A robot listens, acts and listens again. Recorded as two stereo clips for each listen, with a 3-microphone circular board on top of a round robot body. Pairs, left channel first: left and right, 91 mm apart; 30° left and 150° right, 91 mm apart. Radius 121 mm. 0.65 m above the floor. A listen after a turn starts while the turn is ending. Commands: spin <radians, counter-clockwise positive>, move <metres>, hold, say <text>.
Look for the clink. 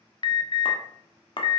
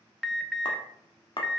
spin 1.22
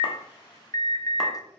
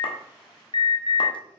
hold
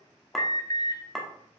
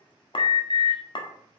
say Facing the clink.